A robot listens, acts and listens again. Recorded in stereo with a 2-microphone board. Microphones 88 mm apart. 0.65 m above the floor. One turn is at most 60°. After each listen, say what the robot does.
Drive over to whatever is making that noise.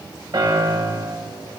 Turn 55° right.
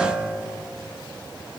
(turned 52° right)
Drive 1.0 m forward.
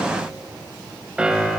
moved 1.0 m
Turn 10° right.
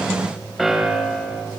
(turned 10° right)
Drive 1.0 m forward.
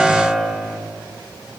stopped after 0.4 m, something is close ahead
Arrived at the piano, straight ahead.